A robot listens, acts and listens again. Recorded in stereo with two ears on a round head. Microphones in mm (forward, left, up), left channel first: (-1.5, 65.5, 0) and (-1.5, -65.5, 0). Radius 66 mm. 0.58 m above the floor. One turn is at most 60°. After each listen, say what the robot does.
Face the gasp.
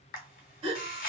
Turn 45° right.
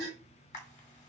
Turn 60° right.
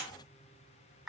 Turn 30° right.
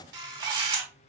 Facing where the gasp came from. I can't hear it now.